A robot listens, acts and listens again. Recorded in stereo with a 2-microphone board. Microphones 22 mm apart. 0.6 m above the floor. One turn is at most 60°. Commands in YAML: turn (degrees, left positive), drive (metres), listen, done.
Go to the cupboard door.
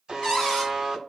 turn: 20
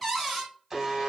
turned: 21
drive: 1.0
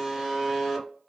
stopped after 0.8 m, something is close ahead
done: "I am next to the cupboard door."